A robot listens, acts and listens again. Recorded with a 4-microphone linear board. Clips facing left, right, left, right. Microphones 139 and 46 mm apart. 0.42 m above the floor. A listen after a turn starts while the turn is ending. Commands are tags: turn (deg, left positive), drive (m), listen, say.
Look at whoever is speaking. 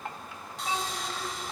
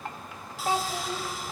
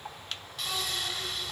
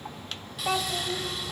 <turn deg="-60"/>
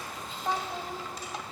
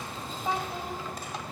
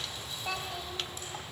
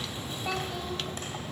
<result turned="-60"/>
<say>Found it: a child speaking, straight ahead.</say>